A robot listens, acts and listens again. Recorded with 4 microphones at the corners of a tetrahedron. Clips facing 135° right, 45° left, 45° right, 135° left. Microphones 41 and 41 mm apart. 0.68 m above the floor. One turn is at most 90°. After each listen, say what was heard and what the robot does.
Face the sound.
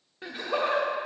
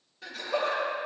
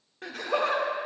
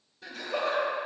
The laughter: 70° right. Turn 70° right.
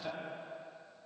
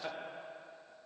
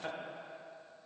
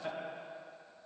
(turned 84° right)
The laughter is now 15° left. Turn 15° left.
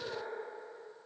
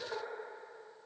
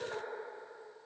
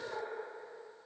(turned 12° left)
Facing the laughter.